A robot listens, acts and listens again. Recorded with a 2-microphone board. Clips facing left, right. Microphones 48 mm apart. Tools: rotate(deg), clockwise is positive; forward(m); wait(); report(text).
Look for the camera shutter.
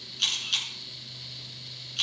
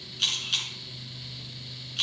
rotate(-30)
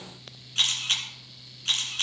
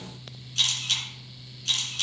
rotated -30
rotate(-150)
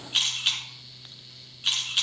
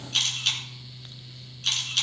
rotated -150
rotate(-10)
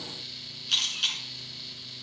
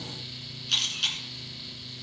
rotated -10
report("Facing the camera shutter, 2 to 4 m away.")